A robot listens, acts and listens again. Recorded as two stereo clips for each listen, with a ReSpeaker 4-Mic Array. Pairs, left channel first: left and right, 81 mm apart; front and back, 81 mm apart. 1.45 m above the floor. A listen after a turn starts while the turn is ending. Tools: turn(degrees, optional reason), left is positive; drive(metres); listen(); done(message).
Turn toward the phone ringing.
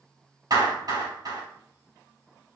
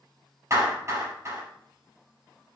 listen()
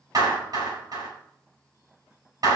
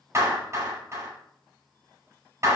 listen()
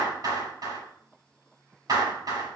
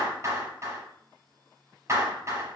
done("I can't make out a phone ringing, only a clap.")